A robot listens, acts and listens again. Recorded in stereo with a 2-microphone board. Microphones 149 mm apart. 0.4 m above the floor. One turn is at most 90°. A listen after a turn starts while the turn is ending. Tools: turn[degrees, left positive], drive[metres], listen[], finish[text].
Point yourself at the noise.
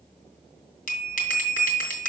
Thought: The bell: about 65° left or 115° left.
Action: turn[65]
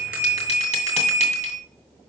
Thought: So it is at 50° left.
Action: turn[50]
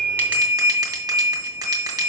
Thought: The bell is now 25° right.
Action: turn[-25]
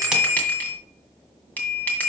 Thought: The bell is now 10° left.
Action: turn[10]
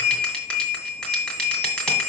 Action: finish[Found it: a bell, straight ahead, 1 to 2 m away.]